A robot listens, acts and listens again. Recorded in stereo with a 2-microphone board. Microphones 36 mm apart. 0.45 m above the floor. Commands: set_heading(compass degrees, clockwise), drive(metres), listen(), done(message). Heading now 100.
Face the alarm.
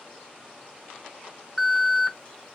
set_heading(70)
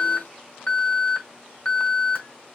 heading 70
set_heading(285)
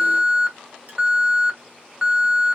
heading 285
set_heading(300)
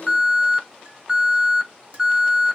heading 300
done("Found it: an alarm, straight ahead.")